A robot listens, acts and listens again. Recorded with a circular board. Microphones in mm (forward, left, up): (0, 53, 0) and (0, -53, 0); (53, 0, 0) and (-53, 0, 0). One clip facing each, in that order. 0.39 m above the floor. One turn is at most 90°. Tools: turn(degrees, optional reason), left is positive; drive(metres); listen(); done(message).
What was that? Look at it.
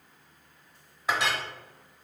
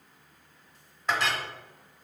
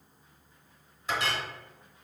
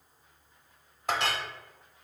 turn(degrees=90, reason="The clink: 170° left.")
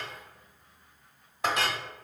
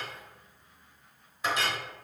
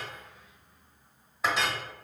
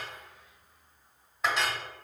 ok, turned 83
turn(degrees=85, reason="The clink is now 85° left.")
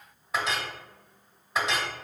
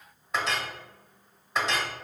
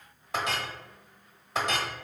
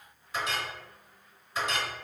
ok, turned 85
done("Found it: a clink, straight ahead.")